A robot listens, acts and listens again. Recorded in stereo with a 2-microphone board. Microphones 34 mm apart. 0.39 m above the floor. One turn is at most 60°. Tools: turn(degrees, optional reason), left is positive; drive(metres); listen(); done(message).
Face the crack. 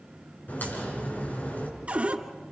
turn(degrees=55, reason="The crack: about 55° left or 125° left.")
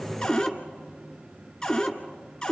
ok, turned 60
listen()
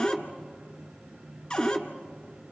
done("I heard a crack, but can't make it out now. It was about 5° right or 65° left.")